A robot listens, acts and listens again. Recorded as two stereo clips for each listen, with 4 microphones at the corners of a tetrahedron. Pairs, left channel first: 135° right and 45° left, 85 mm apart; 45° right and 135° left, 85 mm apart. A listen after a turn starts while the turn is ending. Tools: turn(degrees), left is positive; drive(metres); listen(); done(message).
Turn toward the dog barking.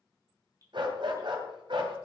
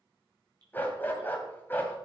turn(degrees=20)
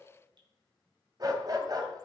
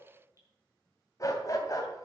done("Found it: a dog barking, straight ahead.")